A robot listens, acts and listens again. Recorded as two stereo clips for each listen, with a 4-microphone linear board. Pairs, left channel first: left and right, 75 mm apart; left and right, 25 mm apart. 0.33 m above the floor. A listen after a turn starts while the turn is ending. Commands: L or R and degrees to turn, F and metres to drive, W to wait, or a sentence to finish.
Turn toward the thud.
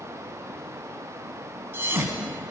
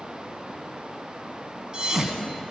R30
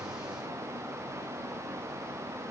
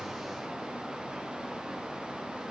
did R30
W
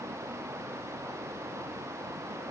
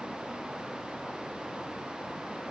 I heard a thud, but can't make it out now. It was about straight ahead or 120° right.